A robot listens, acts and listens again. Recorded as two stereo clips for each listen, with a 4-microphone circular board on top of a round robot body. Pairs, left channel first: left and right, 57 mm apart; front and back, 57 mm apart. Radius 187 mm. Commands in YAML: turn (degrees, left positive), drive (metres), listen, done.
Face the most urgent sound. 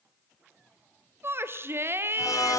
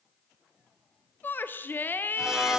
turn: -50
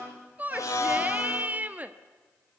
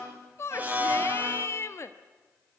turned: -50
turn: -30
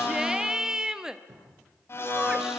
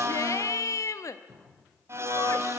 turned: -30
turn: -10
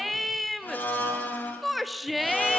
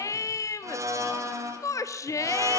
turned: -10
done: "Facing the shout, 1 to 2 m away."